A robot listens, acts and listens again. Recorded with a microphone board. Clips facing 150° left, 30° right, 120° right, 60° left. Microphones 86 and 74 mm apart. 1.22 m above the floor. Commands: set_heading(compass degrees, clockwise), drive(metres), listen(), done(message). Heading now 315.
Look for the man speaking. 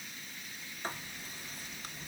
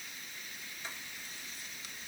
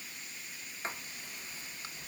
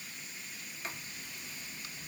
listen()
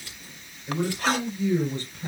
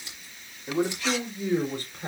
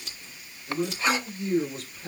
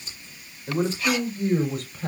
set_heading(305)
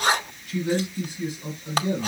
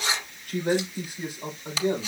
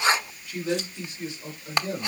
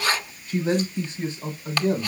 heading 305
done("Facing the man speaking, 2 to 4 m away.")